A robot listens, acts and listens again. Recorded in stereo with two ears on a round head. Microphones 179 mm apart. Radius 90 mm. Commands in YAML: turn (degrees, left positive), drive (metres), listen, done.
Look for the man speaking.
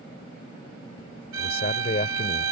turn: 40
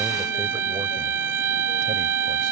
listen: true
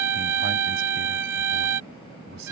turn: -55
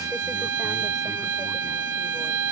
listen: true
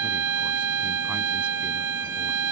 listen: true
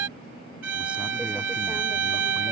done: "Facing where the man speaking came from. I can't hear it now."